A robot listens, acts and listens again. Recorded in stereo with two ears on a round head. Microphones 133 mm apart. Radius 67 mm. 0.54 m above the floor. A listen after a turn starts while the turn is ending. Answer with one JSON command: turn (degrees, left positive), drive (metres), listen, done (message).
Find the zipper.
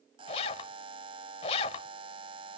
{"turn": 40}
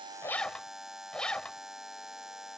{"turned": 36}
{"done": "Facing the zipper."}